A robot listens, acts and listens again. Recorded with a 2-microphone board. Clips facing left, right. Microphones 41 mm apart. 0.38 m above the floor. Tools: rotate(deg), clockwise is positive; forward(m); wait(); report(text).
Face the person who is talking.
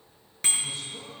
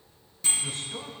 rotate(60)
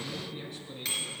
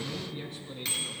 report("Facing the man speaking, 2 to 4 m away.")